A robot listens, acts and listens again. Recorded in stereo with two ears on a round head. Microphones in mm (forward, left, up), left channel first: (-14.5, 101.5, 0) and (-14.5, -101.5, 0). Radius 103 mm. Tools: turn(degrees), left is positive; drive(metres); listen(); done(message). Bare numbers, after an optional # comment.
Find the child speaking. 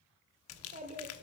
# The child speaking: about 35° right or 145° right.
turn(-35)
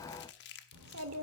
# So it is at 105° right.
turn(-105)
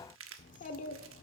# The child speaking is now 40° left.
turn(40)
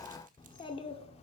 # The child speaking is now 30° left.
turn(30)
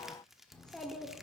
done("Facing the child speaking, 1 to 2 m away.")